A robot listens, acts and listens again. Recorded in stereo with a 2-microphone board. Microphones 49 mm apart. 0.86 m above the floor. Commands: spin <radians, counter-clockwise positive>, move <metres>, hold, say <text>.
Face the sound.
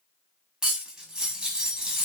spin -0.26
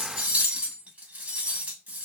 spin -2.62
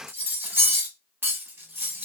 spin -0.79
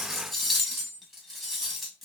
say Facing the cutlery clinking, under 1 m away.